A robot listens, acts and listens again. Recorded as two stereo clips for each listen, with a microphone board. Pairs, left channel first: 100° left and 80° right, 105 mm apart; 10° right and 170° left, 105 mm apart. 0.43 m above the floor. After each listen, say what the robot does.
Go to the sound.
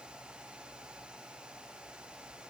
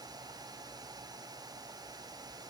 Keep listening.
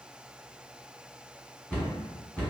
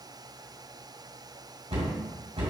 Turn 180° left.
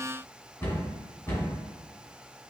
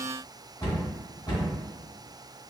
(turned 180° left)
Turn 30° left.
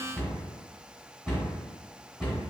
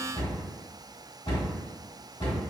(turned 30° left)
Drive 1.0 m forward.
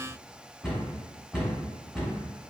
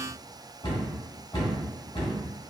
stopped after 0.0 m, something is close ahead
Turn 10° left.
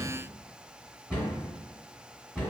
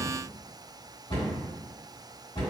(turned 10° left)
Something is in my way. I am facing the cupboard door but have not reached it.